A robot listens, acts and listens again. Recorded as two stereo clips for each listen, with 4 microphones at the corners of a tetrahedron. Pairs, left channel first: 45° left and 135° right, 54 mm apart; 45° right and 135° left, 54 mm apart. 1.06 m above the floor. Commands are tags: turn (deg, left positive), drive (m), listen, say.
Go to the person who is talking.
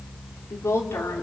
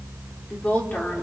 <turn deg="15"/>
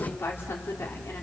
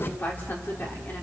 <drive m="1.0"/>
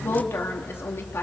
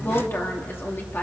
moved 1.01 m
<drive m="1.0"/>
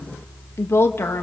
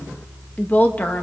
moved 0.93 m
<turn deg="10"/>
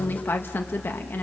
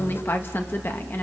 <drive m="1.0"/>
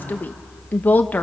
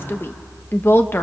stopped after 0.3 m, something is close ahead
<say>I am next to the woman speaking.</say>